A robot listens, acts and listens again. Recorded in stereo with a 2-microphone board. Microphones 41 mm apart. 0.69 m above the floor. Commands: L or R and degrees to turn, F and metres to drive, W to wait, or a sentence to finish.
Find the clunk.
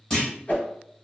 L20
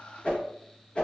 W
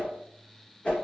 I heard a clunk, but can't make it out now. It was about straight ahead or 140° left.